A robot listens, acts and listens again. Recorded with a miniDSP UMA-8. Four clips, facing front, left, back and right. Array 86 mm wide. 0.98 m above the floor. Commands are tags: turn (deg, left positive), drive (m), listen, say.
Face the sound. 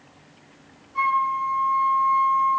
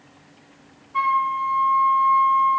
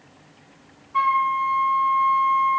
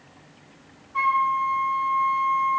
<turn deg="155"/>
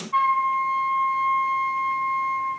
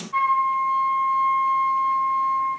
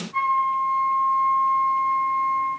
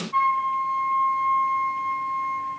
<say>Found it: a flute, straight ahead.</say>